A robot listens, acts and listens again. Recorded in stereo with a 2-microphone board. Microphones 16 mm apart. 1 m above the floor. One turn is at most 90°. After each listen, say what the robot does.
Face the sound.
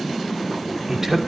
Turn 25° right.
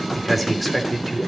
Facing the man speaking.